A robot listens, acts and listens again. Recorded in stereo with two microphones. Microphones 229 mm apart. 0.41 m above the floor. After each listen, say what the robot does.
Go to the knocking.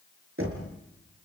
Turn 75° right.
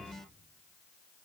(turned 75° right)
Keep listening.
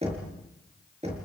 Turn 30° right.
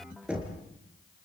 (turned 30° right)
Drive 1.0 m forward.
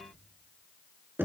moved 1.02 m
Turn 10° right.
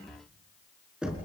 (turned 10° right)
Drive 1.0 m forward.
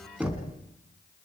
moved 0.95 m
Drive 1.0 m forward.
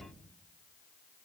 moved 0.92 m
Keep listening.
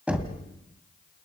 Drive 1.0 m forward.
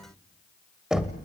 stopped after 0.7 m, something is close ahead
I am next to the knocking.